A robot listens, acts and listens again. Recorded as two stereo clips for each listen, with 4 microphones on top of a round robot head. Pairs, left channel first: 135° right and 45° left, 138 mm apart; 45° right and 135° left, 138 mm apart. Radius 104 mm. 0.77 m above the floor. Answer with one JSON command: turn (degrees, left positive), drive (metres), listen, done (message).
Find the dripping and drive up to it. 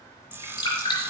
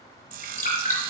{"turn": -75}
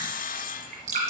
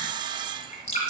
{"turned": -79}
{"drive": 1.0}
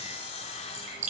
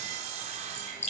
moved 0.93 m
{"drive": 1.0}
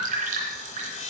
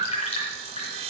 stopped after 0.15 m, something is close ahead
{"done": "Something is in my way. I am facing the dripping but have not reached it."}